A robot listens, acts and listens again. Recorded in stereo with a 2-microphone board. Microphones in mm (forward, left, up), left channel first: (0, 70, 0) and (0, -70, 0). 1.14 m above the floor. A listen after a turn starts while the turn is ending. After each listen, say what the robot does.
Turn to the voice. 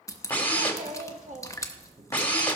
Turn 60° right.
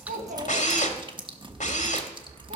Turn 60° right.
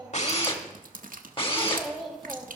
Facing the child speaking.